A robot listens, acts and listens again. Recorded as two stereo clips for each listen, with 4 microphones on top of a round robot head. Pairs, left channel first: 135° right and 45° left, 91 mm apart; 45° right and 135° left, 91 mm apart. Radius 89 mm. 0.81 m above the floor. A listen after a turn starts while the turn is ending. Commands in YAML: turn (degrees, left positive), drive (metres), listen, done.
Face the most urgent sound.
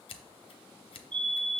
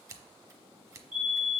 turn: 65
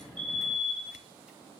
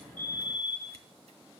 done: "Found it: a fire alarm, straight ahead."